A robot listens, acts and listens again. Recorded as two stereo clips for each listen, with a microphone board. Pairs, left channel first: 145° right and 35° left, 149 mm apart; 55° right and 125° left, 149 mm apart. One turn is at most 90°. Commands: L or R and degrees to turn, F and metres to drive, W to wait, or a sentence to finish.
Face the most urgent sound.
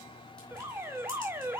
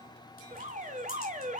L90
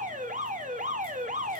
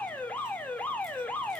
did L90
L25
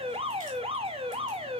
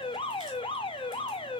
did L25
Found it: an alarm, straight ahead, under 1 m away.